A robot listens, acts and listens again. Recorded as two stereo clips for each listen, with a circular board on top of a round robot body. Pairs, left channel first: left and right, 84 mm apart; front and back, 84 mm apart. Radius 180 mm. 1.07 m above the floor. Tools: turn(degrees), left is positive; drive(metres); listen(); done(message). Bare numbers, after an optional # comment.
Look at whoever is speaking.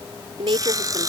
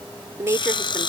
# The woman speaking: 120° right.
turn(-120)
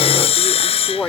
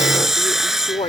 # The woman speaking is now 10° left.
turn(10)
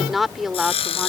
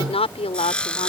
done("Facing the woman speaking.")